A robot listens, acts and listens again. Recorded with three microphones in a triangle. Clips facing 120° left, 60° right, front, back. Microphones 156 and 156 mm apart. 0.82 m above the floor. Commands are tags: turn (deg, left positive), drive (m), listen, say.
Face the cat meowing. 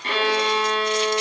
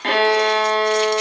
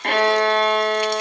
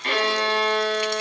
<listen/>
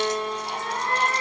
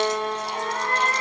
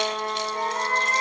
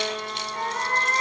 <turn deg="55"/>
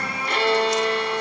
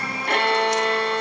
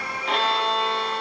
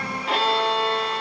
<listen/>
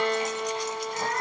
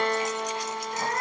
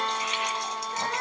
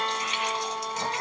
<turn deg="-10"/>
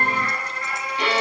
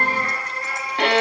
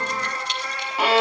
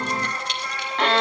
<say>Facing the cat meowing.</say>